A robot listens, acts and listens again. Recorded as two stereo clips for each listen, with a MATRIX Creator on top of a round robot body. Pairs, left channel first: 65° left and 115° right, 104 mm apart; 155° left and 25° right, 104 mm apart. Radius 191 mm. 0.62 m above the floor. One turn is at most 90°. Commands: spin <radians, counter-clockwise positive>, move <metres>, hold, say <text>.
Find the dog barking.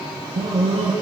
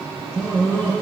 spin -1.57
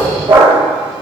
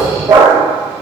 spin -1.40
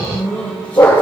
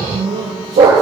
spin -0.17
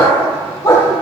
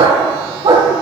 say Facing the dog barking, over 4 m away.